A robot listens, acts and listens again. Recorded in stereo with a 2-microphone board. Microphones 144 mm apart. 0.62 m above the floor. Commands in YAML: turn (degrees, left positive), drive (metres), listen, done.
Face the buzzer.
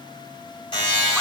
turn: 40
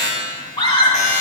turn: 95
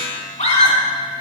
listen: true
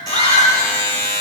turn: 30
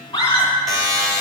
done: "Found it: a buzzer, straight ahead, 2 to 4 m away."